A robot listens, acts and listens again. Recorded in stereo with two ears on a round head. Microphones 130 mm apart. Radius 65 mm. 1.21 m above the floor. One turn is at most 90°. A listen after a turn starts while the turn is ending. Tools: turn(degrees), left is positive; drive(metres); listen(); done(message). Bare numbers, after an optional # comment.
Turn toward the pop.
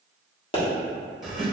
# The pop: about 35° left or 145° left.
turn(35)
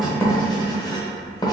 listen()
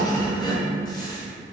done("I heard a pop, but can't make it out now. It was about straight ahead or 110° left.")